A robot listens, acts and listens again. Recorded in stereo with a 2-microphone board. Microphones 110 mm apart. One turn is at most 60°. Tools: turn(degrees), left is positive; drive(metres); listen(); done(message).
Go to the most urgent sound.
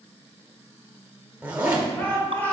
turn(degrees=30)
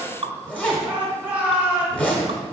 turn(degrees=-15)
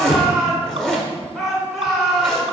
drive(metres=1.0)
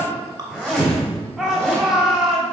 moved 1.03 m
drive(metres=1.0)
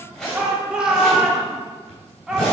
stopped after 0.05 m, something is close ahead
turn(degrees=-10)
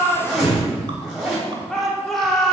done("Arrived at the shout, straight ahead.")